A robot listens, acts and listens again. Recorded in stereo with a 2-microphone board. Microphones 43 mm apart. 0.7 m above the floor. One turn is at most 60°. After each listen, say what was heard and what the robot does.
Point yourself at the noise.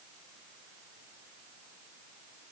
Keep listening.
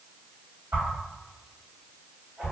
The whoosh: about 60° right or 120° right. Turn 60° right.
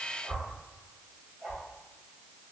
So it is at 55° right. Turn 55° right.
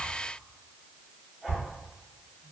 The whoosh is now 15° right. Turn 15° right.
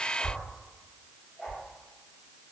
Facing the whoosh.